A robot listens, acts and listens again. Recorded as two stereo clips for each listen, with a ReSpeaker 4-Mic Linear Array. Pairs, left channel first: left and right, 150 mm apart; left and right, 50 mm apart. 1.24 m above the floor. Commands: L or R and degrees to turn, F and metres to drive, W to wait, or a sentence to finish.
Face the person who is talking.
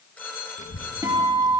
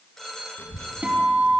L60
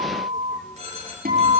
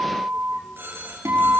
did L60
Found it: a child speaking, straight ahead.